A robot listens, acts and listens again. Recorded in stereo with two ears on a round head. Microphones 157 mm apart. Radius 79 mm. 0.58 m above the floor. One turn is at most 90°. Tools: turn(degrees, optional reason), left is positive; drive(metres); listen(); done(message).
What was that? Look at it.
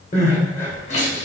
turn(degrees=40, reason="The crying: about 40° left or 140° left.")
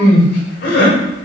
turn(degrees=90, reason="So it is at 95° left.")
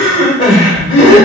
turn(degrees=35, reason="The crying is now 35° left.")
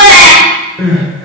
done("Facing the crying.")